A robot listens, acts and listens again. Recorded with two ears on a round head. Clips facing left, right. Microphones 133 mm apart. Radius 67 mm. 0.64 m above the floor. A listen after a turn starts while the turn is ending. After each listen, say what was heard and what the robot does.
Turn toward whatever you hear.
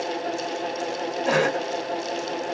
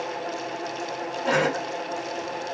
Turn 30° left.
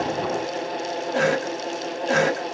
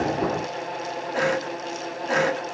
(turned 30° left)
So it is at 145° left. Turn 145° left.
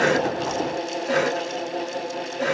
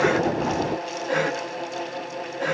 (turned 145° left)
The cough is now 50° left. Turn 50° left.
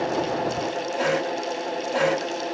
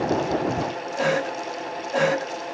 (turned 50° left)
Found it: a cough, straight ahead.